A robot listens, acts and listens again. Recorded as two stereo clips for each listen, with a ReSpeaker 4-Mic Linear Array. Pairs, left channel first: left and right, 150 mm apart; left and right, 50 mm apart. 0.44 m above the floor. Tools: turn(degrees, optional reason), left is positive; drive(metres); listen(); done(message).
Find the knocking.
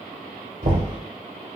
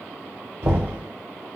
turn(degrees=-60, reason="The knocking: about 60° right or 120° right.")
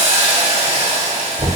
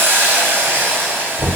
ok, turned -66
turn(degrees=-35, reason="So it is at 35° right.")
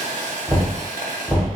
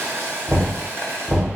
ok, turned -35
done("Found it: knocking, straight ahead.")